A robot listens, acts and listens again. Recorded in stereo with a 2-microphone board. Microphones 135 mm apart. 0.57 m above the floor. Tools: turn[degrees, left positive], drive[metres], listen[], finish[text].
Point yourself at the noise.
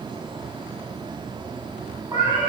Thought: The cat meowing: about 25° right or 155° right.
Action: turn[-25]
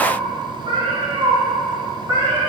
Thought: The cat meowing: about 25° right or 155° right.
Action: turn[-25]
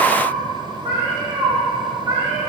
Thought: The cat meowing: about 35° right or 145° right.
Action: turn[-35]
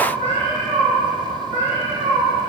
Thought: So it is at 110° right.
Action: turn[-110]
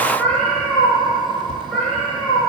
Thought: The cat meowing is now 10° left.
Action: turn[10]
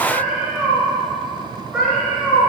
Action: finish[Found it: a cat meowing, straight ahead, 2 to 4 m away.]